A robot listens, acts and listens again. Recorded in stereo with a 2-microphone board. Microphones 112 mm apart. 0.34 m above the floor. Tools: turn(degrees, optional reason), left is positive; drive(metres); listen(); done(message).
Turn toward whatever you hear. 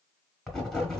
turn(degrees=30)
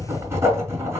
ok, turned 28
turn(degrees=-25, reason="So it is at 25° right.")
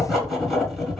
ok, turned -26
done("Found it: writing, straight ahead, 1 to 2 m away.")